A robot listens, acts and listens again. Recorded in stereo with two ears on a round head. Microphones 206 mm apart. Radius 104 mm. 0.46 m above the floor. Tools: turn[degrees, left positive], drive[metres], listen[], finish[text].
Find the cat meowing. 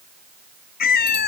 Thought: The cat meowing: about 40° left or 140° left.
Action: turn[40]
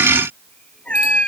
Action: finish[Facing the cat meowing.]